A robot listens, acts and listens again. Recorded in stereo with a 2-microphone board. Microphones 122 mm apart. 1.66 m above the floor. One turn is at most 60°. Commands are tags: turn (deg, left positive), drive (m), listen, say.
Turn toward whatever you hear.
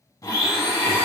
<turn deg="25"/>
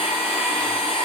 <turn deg="60"/>
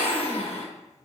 <turn deg="60"/>
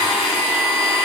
<say>Found it: a blender, straight ahead, 1 to 2 m away.</say>